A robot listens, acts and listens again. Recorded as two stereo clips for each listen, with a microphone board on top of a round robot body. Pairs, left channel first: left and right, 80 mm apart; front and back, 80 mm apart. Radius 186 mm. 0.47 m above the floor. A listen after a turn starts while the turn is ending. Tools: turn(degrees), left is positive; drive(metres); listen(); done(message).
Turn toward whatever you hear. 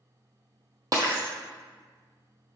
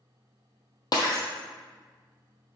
turn(degrees=-45)
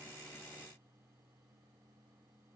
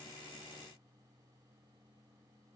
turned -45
done("Facing where the breaking glass came from. I can't hear it now.")